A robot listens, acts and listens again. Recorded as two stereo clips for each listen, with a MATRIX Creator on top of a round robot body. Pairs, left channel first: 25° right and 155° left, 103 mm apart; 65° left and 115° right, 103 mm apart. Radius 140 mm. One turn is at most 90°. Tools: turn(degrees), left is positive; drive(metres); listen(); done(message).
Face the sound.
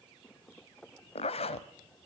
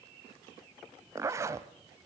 turn(degrees=-50)
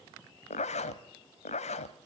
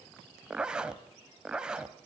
turn(degrees=-30)
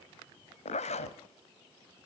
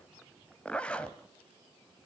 turn(degrees=-10)
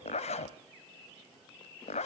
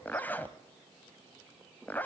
done("Found it: a zipper, straight ahead.")